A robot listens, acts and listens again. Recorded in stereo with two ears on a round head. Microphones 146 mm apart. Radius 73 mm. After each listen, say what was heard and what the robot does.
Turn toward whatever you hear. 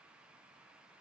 Keep listening.
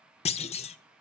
The clunk: about 40° left or 140° left. Turn 40° left.
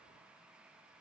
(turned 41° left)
Keep listening.
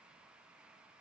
I heard a clunk, but can't make it out now. It was about 5° right or 100° left.